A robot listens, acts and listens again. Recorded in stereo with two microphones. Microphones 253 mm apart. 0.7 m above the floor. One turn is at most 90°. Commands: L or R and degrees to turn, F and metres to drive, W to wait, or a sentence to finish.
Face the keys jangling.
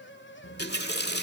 W
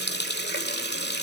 W
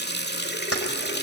L65
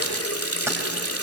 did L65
W
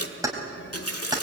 R15
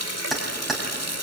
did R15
Facing the keys jangling, 2 to 4 m away.